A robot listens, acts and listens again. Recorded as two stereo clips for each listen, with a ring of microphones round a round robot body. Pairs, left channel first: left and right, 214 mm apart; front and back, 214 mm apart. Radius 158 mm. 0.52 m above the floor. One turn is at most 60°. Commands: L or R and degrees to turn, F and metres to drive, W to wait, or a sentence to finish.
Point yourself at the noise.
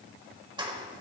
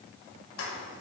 R20
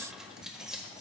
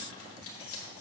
Facing the keys jangling, 1 to 2 m away.